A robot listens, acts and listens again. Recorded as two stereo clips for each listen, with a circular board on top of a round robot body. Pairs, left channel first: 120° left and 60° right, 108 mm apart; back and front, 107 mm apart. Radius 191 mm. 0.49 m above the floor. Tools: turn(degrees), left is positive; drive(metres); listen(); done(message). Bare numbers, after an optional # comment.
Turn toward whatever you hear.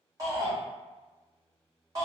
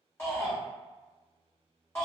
# The shout: 110° right.
turn(-110)
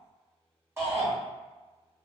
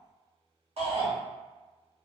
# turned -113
done("Found it: a shout, straight ahead, 1 to 2 m away.")